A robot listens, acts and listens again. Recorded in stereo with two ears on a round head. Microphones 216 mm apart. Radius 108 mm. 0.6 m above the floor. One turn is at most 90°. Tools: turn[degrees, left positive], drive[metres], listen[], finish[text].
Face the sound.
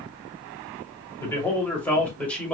Action: turn[30]
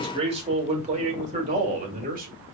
Thought: So it is at 35° right.
Action: turn[-35]
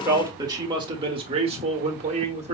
Thought: The man speaking is now 25° right.
Action: turn[-25]
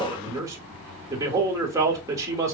Thought: The man speaking is now 15° right.
Action: turn[-15]
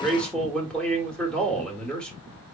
Action: finish[Found it: a man speaking, straight ahead, 1 to 2 m away.]